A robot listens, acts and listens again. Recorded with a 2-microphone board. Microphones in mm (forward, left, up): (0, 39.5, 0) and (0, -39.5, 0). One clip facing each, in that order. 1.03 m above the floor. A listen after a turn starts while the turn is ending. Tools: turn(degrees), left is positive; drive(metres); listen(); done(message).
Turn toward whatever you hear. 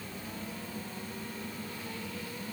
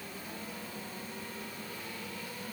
listen()
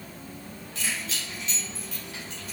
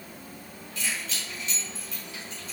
turn(degrees=90)
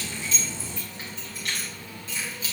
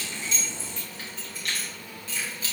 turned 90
turn(degrees=20)
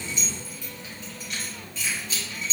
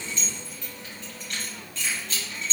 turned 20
done("Found it: keys jangling, straight ahead.")